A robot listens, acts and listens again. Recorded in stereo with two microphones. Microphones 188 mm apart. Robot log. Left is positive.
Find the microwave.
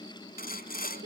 cmd idle
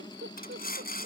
cmd idle
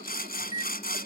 note: The microwave: about 35° left or 145° left.
cmd yaw +35
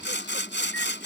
cmd idle
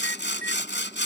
note: So it is at 10° left.
cmd yaw +10
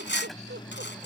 end: Facing the microwave.